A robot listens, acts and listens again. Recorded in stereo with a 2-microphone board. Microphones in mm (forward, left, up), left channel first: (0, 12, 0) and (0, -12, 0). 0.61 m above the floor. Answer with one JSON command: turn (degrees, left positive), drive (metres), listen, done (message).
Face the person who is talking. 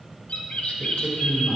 {"turn": 30}
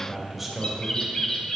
{"done": "Found it: a man speaking, straight ahead, 2 to 4 m away."}